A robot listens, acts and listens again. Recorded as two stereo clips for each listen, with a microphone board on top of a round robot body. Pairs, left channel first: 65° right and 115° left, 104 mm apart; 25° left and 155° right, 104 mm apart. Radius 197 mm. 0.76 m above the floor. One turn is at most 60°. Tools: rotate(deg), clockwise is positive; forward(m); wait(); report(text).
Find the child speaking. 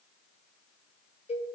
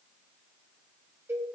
wait()
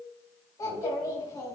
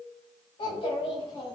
rotate(10)
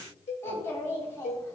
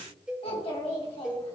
report("Found it: a child speaking, straight ahead.")